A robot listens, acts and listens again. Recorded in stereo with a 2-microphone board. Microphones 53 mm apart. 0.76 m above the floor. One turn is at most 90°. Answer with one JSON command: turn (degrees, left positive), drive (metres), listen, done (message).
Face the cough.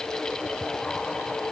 {"listen": true}
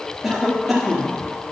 {"turn": 30}
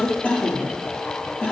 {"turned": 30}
{"turn": 90}
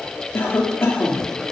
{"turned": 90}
{"turn": 60}
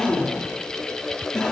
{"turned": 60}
{"turn": 10}
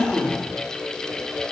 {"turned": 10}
{"done": "Facing the cough, 2 to 4 m away."}